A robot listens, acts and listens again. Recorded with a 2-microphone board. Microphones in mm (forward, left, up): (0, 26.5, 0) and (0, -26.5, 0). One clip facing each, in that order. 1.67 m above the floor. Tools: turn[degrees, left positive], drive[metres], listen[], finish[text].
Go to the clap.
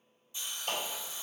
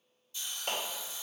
Thought: The clap: about 45° right or 135° right.
Action: turn[-45]
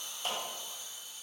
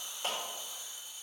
Thought: So it is at 90° right.
Action: turn[-90]
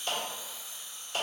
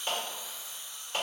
Thought: The clap is now 30° right.
Action: turn[-30]
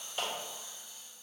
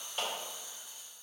Action: drive[1.0]
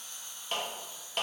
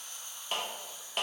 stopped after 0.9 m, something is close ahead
Action: finish[Arrived at the clap, straight ahead.]